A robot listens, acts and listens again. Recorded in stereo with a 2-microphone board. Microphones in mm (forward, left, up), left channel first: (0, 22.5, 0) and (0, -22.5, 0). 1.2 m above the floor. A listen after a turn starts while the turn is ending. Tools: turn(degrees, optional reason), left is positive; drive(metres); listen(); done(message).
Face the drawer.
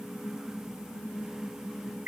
listen()
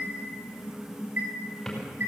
listen()
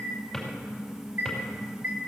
turn(degrees=30)
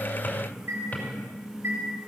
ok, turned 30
listen()
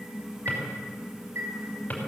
turn(degrees=150, reason="So it is at 150° left.")
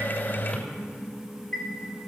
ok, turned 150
listen()
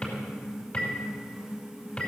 turn(degrees=30, reason="The drawer is now 30° left.")
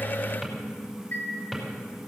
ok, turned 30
done("Found it: a drawer, straight ahead.")